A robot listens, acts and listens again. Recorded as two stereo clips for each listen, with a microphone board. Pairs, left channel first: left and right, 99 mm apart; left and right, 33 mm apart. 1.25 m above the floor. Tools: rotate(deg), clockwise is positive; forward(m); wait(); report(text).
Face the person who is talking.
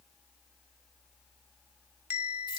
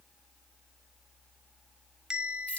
wait()
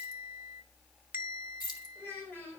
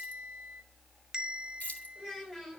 rotate(-20)
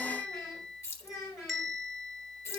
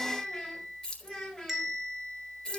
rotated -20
rotate(-30)
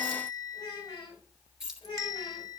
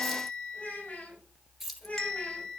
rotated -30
rotate(-115)
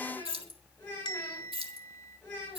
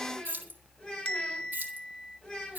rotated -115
rotate(-20)
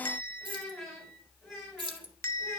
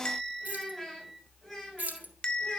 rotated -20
report("Found it: a child speaking, straight ahead, over 4 m away.")